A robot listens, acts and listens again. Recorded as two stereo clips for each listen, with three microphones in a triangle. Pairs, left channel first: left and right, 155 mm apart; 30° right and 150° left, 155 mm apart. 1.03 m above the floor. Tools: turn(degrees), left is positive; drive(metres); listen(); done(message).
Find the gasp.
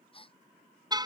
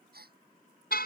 turn(degrees=145)
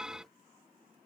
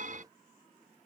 done("I heard a gasp from this way, but can't make it out now.")